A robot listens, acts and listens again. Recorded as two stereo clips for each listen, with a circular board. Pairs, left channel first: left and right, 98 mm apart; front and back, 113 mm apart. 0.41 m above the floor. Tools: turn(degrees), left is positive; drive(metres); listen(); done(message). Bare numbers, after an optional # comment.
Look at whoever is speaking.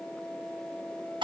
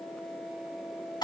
listen()
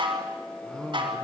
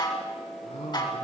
# The man speaking: 10° left.
turn(10)
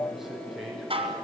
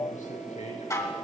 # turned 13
done("Facing the man speaking, over 4 m away.")